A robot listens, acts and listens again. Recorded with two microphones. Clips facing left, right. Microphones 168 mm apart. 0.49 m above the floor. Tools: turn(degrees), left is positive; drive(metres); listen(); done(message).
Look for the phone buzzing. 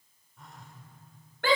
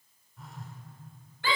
turn(degrees=30)
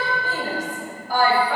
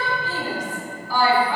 listen()
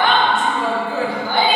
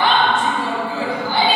listen()
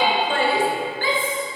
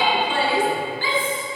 done("I heard a phone buzzing, but can't make it out now. It was about 30° right or 150° left.")